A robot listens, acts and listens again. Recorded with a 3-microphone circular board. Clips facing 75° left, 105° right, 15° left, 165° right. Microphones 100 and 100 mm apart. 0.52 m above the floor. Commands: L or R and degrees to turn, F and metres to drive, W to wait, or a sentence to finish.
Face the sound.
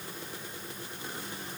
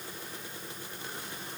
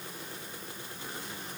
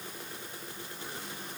W
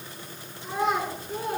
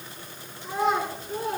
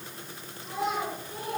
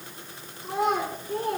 L165
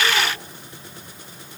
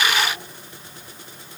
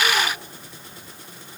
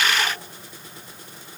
W
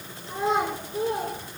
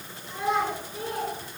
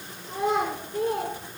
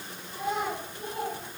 L15
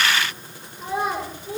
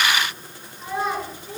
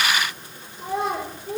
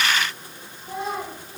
Facing the child speaking.